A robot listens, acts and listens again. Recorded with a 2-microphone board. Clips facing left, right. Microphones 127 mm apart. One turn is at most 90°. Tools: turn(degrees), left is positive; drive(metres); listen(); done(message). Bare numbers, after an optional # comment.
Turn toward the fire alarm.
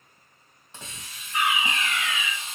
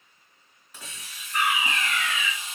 # The fire alarm: about 50° right or 130° right.
turn(-50)
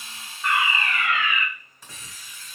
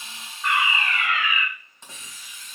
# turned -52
done("Facing the fire alarm, 2 to 4 m away.")